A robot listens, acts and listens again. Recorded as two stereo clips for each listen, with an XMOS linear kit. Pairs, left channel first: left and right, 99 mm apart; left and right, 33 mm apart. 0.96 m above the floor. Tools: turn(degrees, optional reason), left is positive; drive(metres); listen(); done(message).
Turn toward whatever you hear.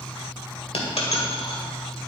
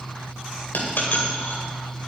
turn(degrees=90)
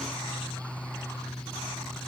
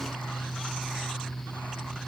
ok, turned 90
done("Facing where the dropped coin came from. I can't hear it now.")